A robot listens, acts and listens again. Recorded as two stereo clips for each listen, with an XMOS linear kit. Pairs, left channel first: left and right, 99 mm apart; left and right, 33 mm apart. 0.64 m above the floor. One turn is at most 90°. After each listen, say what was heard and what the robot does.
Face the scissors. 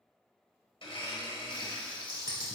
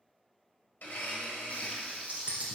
The scissors: about 40° right or 140° right. Turn 40° right.
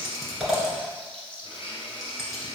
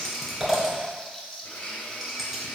Found it: scissors, straight ahead, 1 to 2 m away.